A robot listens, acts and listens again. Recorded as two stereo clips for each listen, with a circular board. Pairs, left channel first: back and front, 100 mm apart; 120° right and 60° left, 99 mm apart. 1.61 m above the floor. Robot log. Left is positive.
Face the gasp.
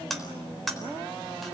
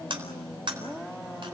cmd idle
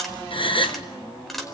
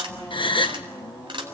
note: The gasp: 155° right.
cmd yaw -155
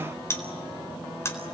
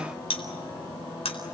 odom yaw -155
end: I heard a gasp from this way, but can't make it out now.